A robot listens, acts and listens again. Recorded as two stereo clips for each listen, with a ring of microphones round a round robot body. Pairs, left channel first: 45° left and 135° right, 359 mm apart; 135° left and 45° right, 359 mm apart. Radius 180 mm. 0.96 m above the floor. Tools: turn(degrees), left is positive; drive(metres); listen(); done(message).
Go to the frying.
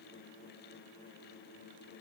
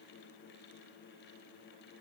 listen()
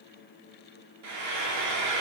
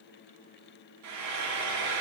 turn(degrees=-90)
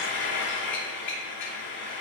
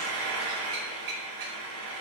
turn(degrees=-15)
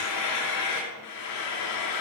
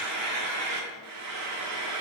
drive(metres=1.0)
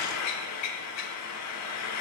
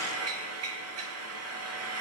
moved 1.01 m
drive(metres=1.0)
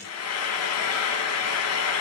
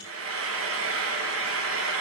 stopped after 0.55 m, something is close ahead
done("Arrived at the frying, straight ahead.")